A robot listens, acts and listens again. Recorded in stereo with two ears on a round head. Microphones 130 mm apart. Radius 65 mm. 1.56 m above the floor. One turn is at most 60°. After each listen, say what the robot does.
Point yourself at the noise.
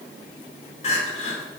Turn 50° left.
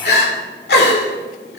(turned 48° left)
Turn 60° left.
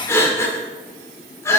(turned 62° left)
Turn 20° left.
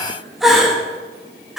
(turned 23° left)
Facing the crying, 2 to 4 m away.